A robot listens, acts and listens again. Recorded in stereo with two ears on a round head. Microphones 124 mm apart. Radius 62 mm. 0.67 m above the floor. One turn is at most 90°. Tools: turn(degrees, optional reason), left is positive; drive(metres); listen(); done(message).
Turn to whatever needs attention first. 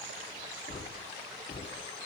listen()
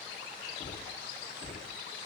listen()
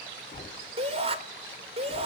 turn(degrees=-45, reason="The shout: about 45° right or 135° right.")
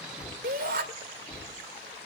turn(degrees=-85, reason="So it is at 85° right.")
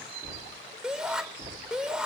done("Found it: a shout, straight ahead, 2 to 4 m away.")